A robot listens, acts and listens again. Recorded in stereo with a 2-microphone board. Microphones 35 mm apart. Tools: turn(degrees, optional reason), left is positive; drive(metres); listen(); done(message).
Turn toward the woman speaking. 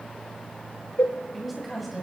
turn(degrees=30)
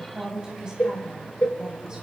turn(degrees=-30, reason="So it is at 30° right.")
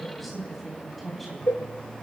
done("Found it: a woman speaking, straight ahead, 2 to 4 m away.")